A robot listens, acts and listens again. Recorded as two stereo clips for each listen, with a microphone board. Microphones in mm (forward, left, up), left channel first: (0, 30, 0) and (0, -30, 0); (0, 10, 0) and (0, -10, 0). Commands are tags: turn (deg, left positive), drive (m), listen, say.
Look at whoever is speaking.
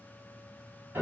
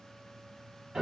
<listen/>
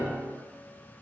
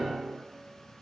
<listen/>
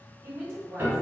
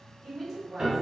<turn deg="30"/>
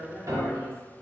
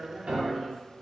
<turn deg="145"/>
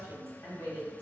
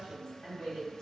<turn deg="35"/>
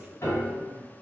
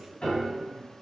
<listen/>
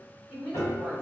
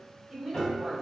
<turn deg="-15"/>
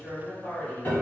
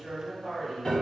<say>Found it: a woman speaking, straight ahead, 1 to 2 m away.</say>